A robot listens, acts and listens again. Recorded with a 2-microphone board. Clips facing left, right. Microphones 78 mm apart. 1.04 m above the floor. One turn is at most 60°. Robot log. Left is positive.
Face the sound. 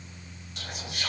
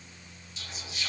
note: The whispering: about 60° left or 120° left.
cmd yaw +60
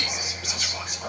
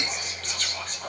note: So it is at 10° left.
cmd yaw +10
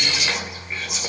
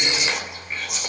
end: Found it: whispering, straight ahead.